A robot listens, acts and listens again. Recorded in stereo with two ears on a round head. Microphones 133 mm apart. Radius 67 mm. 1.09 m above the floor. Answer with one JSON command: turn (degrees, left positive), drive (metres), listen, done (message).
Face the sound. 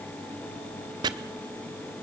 {"turn": -25}
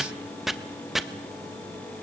{"done": "Facing the chopping, 1 to 2 m away."}